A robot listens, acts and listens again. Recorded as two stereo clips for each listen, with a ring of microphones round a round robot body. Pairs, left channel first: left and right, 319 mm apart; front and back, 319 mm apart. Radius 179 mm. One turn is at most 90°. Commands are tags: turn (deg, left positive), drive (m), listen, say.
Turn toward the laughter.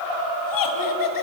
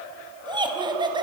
<turn deg="90"/>
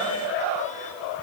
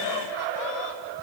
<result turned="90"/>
<turn deg="15"/>
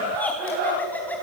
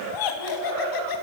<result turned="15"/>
<say>Facing the laughter.</say>